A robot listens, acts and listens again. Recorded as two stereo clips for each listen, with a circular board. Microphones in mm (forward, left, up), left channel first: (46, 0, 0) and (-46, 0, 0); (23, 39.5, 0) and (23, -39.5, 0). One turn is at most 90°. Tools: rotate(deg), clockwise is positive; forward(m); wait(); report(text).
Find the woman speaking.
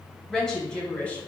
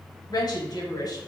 rotate(-75)
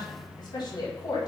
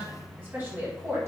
rotate(35)
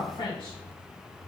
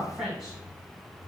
rotate(10)
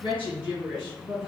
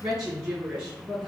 rotate(15)
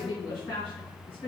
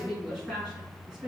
report("Found it: a woman speaking, straight ahead.")